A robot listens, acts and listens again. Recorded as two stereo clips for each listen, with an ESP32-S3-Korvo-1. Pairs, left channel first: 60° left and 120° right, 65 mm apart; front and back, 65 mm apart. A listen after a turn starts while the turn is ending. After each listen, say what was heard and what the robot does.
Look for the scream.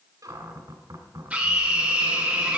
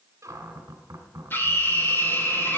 The scream: 55° right. Turn 55° right.
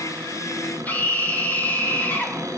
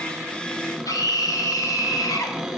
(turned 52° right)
Facing the scream, 2 to 4 m away.